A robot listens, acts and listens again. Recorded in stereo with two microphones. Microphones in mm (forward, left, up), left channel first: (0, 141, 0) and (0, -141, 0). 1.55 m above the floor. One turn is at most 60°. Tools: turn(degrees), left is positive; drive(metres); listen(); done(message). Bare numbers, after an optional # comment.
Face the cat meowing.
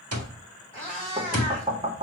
# The cat meowing: about 20° left or 160° left.
turn(20)
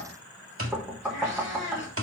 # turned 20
# So it is at 140° left.
turn(60)
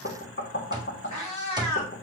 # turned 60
# The cat meowing is now 95° left.
turn(60)
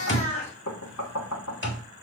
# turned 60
# The cat meowing is now 30° left.
turn(30)
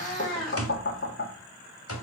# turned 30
done("Found it: a cat meowing, straight ahead.")